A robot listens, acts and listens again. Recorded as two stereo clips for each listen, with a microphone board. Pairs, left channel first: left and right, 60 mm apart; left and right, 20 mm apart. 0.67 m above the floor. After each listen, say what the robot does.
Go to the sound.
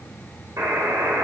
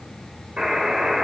Turn 65° right.
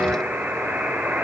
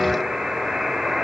Turn 40° right.
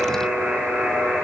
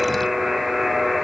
Turn 10° right.
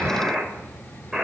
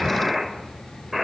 Drive 1.0 m forward.
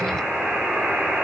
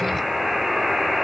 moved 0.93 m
Turn 10° right.
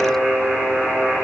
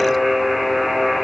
Drive 1.0 m forward.
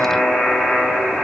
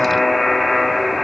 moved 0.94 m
Drive 1.0 m forward.
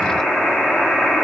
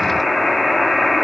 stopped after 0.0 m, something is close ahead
I am next to the buzzer.